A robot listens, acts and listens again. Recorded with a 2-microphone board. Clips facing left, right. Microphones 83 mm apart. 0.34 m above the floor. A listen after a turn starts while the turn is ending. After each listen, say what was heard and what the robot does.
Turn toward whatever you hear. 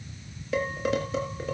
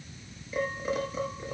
Turn 90° left.
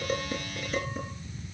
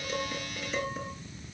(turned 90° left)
Keep listening.
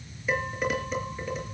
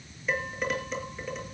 Facing the dishes clattering.